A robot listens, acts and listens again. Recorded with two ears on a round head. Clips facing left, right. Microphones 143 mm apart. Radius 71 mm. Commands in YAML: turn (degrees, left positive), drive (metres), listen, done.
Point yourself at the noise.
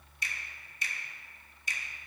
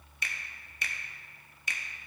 turn: -55
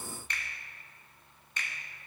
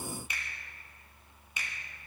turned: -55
turn: -10
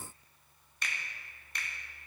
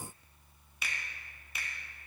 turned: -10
done: "Found it: a finger snap, straight ahead."